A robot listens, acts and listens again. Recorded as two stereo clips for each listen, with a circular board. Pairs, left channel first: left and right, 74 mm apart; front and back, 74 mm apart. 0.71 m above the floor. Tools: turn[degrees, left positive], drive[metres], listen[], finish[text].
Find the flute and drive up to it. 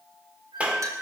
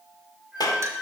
Thought: The flute: 100° right.
Action: turn[-100]
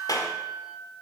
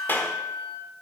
Thought: The flute is now 20° right.
Action: turn[-20]
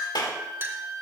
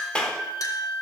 Action: drive[1.0]
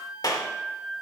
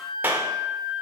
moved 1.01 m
Action: drive[1.0]
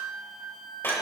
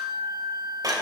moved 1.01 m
Action: drive[1.0]
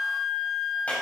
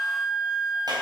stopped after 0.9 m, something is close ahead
Action: finish[Arrived at the flute, straight ahead.]